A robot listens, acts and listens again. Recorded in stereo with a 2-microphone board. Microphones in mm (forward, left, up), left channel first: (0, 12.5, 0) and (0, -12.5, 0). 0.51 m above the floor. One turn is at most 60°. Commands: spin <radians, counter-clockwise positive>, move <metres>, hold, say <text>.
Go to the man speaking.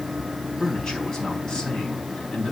spin 0.52
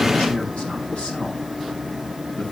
hold
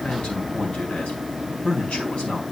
spin 1.05
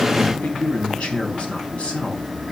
spin 1.05
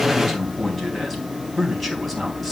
move 1.0
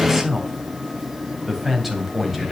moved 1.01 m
spin -0.17
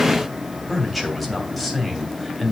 move 1.0
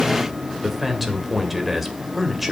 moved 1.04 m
spin -0.17
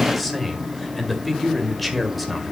move 1.0
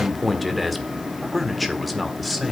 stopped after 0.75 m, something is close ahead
say Arrived at the man speaking, straight ahead.